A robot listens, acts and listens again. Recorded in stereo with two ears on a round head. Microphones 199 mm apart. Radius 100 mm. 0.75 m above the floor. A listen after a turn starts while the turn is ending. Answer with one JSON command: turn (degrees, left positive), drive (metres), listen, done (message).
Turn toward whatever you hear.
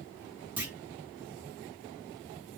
{"turn": -30}
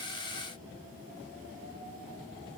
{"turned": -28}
{"listen": true}
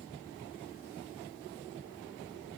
{"done": "I heard a clunk, but can't make it out now. It was about 20° left or 145° right."}